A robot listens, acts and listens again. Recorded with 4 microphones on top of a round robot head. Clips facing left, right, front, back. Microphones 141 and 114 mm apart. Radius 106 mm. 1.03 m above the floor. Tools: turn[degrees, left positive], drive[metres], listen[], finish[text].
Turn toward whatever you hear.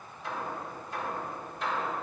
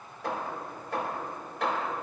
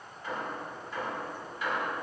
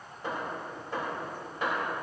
Thought: The hammering: 120° right.
Action: turn[-120]
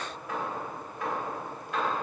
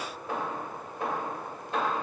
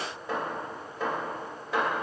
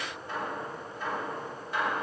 Thought: The hammering is now 20° right.
Action: turn[-20]
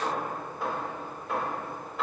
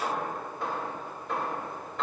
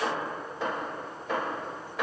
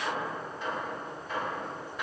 Action: finish[Facing the hammering.]